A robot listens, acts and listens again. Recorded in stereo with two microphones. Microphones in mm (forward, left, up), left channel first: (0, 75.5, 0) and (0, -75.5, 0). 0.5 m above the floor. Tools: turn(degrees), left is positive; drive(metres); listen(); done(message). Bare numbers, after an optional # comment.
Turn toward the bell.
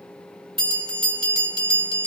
# The bell: about 35° right or 145° right.
turn(-35)
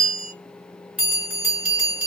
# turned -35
# So it is at 10° right.
turn(-10)
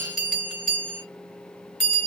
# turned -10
done("Found it: a bell, straight ahead, 2 to 4 m away.")